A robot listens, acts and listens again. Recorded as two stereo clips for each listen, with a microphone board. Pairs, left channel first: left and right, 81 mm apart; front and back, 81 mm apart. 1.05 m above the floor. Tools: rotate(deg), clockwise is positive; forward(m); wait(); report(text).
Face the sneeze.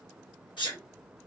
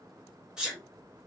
rotate(-100)
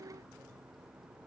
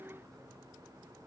report("Facing where the sneeze came from. I can't hear it now.")